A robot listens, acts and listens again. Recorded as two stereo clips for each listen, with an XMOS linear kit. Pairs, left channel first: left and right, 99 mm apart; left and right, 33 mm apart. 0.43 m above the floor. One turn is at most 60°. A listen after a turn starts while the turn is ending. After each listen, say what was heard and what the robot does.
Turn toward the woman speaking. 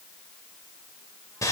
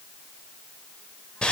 Keep listening.
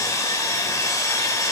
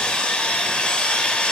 Keep listening.
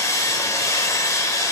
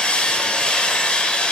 I can't make out a woman speaking to turn to.